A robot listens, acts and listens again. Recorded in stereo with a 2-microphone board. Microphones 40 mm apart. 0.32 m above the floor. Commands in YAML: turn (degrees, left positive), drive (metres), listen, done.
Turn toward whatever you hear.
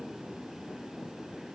listen: true
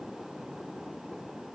listen: true
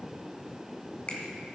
turn: 30
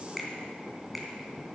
done: "Facing the finger snap."